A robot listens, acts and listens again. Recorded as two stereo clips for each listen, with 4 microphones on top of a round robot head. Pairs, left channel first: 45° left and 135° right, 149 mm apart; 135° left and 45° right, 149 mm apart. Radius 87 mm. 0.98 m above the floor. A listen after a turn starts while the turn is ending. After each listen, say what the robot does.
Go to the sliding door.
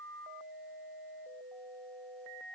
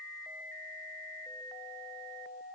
Keep listening.
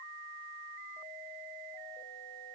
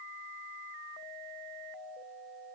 Keep listening.
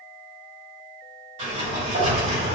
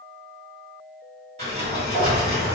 Turn 90° right.
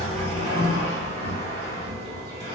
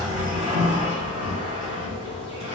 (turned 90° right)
Drive 1.0 m forward.
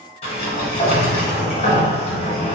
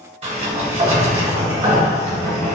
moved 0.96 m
Drive 1.0 m forward.
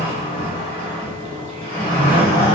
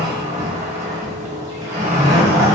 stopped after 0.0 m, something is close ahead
Arrived at the sliding door, straight ahead.